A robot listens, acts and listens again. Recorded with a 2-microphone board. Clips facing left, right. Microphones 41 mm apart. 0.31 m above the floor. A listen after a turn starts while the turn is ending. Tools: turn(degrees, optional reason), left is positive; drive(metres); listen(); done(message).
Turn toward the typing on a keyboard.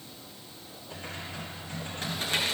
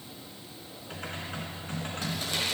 turn(degrees=-60, reason="The typing on a keyboard: about 60° right or 120° right.")
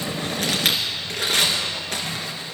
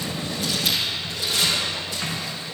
turn(degrees=-50, reason="So it is at 50° right.")
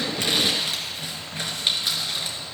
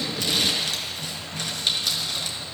done("Facing the typing on a keyboard.")